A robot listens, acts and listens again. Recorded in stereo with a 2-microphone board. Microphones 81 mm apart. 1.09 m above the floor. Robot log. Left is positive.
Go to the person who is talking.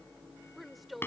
cmd yaw +30
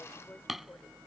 cmd idle
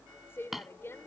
note: So it is at 150° left.
cmd yaw +150
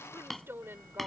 note: The woman speaking is now 30° right.
cmd yaw -30
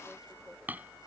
cmd idle
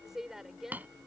cmd fwd 1.0
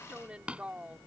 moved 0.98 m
note: The woman speaking is now 15° right.
cmd yaw -15
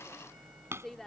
cmd fwd 1.0
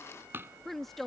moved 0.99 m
cmd fwd 1.0
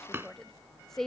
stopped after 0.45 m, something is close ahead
end: I am next to the woman speaking.